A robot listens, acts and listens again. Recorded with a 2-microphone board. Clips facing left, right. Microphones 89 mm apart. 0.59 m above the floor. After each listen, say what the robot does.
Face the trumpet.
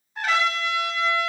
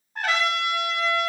Turn 50° right.
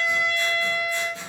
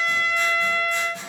Found it: a trumpet, straight ahead, 1 to 2 m away.